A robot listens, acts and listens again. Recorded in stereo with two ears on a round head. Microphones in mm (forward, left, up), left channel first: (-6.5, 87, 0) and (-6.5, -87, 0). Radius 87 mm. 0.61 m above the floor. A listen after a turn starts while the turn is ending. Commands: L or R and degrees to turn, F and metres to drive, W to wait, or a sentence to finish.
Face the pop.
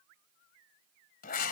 W
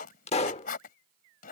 L30
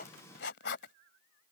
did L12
W
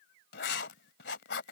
I heard a pop, but can't make it out now. It was about 20° left or 135° left.